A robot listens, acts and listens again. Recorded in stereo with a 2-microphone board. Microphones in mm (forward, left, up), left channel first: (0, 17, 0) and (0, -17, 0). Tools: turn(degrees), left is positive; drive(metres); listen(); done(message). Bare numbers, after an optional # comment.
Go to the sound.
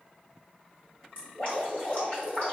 # The dripping: about 40° left or 140° left.
turn(40)
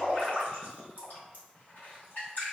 # So it is at 95° left.
turn(95)
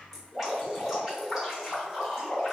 drive(1.0)
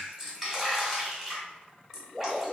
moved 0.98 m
# The dripping is now 10° right.
turn(-10)
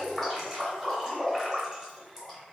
drive(1.0)
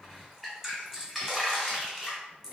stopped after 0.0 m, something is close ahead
done("I am next to the dripping.")